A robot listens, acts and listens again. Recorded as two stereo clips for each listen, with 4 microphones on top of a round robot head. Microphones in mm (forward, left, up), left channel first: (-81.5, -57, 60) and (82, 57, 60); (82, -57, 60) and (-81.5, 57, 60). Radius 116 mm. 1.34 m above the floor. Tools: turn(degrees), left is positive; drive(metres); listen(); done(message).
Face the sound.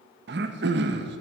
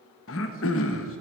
done("Found it: throat clearing, straight ahead.")